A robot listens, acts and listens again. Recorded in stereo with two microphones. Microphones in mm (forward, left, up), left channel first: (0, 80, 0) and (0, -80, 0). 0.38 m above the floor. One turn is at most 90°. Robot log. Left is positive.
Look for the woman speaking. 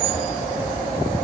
cmd idle
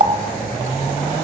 cmd idle
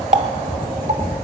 end: I can't make out a woman speaking to turn to.